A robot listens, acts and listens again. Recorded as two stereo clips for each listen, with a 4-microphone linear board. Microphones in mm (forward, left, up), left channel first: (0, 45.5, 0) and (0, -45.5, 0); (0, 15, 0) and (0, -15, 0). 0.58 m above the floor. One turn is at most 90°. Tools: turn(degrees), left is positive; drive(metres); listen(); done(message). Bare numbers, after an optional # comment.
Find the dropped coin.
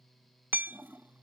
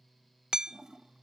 listen()
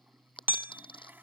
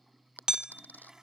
# The dropped coin: about 70° left or 110° left.
turn(70)
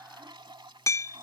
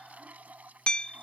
listen()
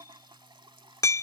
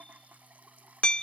done("I heard a dropped coin, but can't make it out now. It was about straight ahead or 40° left.")